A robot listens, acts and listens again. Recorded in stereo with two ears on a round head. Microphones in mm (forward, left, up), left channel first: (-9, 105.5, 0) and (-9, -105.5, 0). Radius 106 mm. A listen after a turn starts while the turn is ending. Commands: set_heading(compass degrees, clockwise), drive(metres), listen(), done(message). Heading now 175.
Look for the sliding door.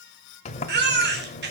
set_heading(145)
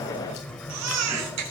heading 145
done("Facing the sliding door, 1 to 2 m away.")